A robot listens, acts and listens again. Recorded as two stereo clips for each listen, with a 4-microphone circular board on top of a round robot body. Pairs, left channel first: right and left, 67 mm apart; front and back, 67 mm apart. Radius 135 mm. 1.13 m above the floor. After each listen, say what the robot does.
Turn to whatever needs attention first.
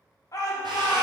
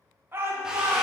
Turn 125° right.
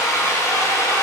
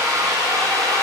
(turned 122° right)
Keep listening.
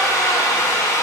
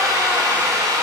Keep listening.
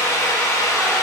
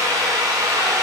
Facing where the shout came from. I can't hear it now.